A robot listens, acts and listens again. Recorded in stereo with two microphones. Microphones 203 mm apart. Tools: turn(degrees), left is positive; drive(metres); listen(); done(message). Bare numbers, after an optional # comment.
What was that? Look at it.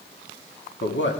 # The man speaking: about 65° left or 115° left.
turn(65)
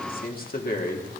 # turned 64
# So it is at 50° left.
turn(50)
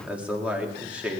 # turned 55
done("Found it: a man speaking, straight ahead.")